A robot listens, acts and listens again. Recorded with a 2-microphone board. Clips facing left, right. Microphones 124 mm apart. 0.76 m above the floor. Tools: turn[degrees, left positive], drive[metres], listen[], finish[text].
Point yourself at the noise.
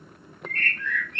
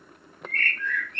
Thought: The bird: about 15° left or 165° left.
Action: turn[15]
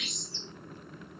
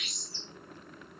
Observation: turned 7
Thought: The bird: about 25° left or 155° left.
Action: turn[25]
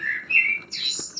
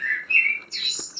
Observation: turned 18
Thought: So it is at 135° left.
Action: turn[135]
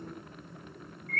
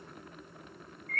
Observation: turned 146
Thought: The bird is now 10° right.
Action: turn[-10]
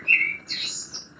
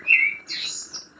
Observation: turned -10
Action: finish[Found it: a bird, straight ahead, 1 to 2 m away.]